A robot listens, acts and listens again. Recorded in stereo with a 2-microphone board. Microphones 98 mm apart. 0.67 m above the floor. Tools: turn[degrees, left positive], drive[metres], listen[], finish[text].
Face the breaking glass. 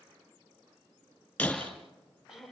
Action: turn[30]
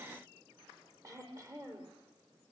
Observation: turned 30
Action: listen[]
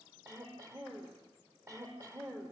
Action: finish[I heard breaking glass, but can't make it out now. It was about 20° right or 140° left.]